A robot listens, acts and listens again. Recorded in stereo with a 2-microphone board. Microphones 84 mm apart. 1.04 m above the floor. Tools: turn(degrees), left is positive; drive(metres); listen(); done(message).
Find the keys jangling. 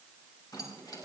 turn(degrees=55)
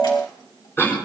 listen()
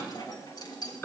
turn(degrees=55)
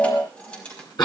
turn(degrees=15)
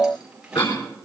turn(degrees=-10)
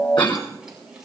turn(degrees=-10)
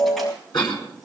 listen()
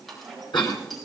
done("Found it: keys jangling, straight ahead.")